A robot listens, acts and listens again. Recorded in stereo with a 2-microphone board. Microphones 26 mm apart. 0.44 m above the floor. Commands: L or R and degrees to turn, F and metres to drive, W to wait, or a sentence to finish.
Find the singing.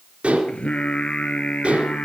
L50
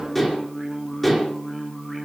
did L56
Facing the singing, 2 to 4 m away.